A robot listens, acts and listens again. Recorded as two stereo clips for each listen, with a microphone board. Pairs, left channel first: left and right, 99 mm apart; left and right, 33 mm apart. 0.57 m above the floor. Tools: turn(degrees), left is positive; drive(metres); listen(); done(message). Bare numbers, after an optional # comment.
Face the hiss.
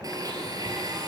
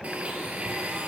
listen()
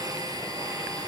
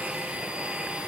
listen()
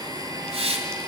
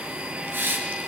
turn(-90)
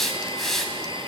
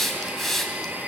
done("Found it: a hiss, straight ahead, 2 to 4 m away.")